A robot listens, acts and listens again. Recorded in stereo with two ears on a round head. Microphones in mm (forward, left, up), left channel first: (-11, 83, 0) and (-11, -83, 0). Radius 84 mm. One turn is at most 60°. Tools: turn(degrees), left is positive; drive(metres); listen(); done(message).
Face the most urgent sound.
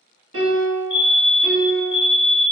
turn(degrees=30)
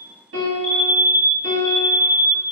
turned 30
turn(degrees=-20)
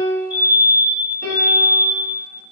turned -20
turn(degrees=-10)
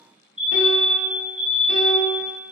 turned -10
done("Facing the fire alarm, 1 to 2 m away.")